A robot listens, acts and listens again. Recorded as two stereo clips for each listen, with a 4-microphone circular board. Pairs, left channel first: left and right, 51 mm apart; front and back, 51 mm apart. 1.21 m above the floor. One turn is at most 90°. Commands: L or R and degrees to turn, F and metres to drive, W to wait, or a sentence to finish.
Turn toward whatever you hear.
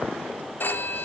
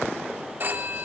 L90
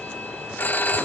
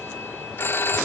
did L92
L40
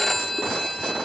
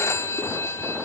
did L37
Found it: a phone ringing, straight ahead.